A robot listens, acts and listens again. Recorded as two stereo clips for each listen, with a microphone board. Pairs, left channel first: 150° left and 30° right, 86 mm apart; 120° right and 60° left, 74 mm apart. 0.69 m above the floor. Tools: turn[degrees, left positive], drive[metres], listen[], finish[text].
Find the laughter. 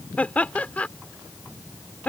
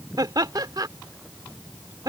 Thought: The laughter: 75° left.
Action: turn[75]
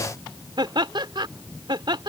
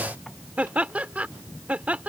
Thought: The laughter is now 10° right.
Action: turn[-10]
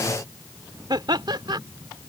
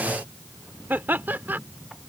Action: finish[Found it: laughter, straight ahead.]